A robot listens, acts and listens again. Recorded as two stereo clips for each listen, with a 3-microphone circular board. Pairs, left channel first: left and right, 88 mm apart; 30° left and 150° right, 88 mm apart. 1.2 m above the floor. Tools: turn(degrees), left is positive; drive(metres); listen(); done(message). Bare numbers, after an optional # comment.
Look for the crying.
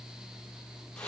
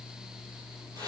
listen()
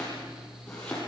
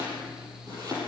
listen()
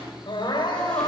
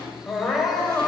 # The crying: 120° left.
turn(120)
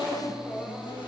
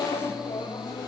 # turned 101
# The crying is now 20° left.
turn(20)
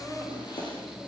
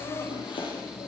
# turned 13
done("Found it: crying, straight ahead, over 4 m away.")